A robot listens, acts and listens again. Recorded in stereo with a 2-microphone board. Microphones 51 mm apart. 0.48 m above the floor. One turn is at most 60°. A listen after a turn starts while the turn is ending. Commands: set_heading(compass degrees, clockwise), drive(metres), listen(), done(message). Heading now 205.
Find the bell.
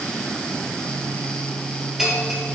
set_heading(235)
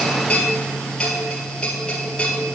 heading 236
set_heading(216)
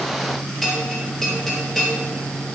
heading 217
done("Found it: a bell, straight ahead, 2 to 4 m away.")